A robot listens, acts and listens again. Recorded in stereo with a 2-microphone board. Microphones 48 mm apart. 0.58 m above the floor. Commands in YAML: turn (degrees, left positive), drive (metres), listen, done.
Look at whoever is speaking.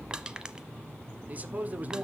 turn: -35
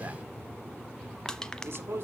turn: -105
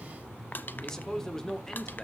turn: 15
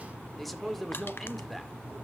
done: "Facing the man speaking."